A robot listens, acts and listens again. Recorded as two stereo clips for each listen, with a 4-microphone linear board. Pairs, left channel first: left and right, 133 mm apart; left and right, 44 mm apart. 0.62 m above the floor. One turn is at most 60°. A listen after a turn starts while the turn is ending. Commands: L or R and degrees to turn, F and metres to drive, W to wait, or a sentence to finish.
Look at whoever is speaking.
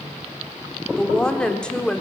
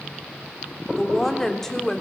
L30
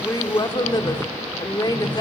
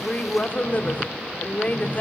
L60
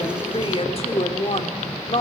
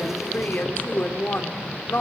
L60
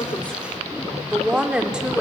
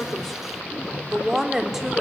R10
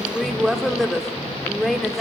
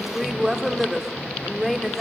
Found it: a woman speaking, straight ahead, 2 to 4 m away.